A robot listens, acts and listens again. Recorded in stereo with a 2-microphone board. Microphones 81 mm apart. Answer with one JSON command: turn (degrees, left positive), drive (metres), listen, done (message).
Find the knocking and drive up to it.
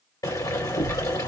{"turn": 90}
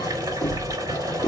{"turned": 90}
{"turn": 15}
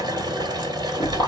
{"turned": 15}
{"drive": 1.0}
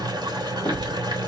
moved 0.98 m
{"turn": 10}
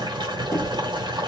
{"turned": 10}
{"drive": 1.0}
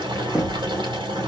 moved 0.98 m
{"turn": -10}
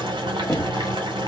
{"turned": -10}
{"drive": 1.0}
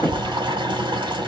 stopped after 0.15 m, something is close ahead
{"done": "Arrived at the knocking, straight ahead."}